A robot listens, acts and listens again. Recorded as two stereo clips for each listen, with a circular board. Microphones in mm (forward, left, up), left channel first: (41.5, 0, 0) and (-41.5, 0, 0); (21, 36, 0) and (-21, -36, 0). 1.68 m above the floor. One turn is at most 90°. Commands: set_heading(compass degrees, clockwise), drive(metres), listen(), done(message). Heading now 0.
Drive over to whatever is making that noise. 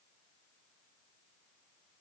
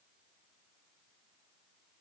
listen()
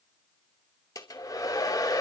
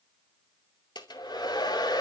set_heading(320)
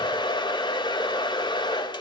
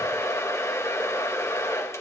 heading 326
set_heading(316)
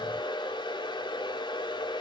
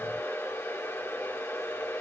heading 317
drive(1.0)
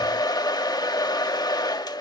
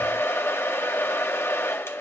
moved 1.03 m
set_heading(307)
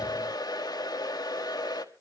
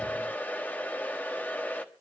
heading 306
drive(1.0)
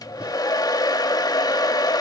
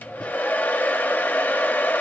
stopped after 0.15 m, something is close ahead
done("I am next to the hair dryer.")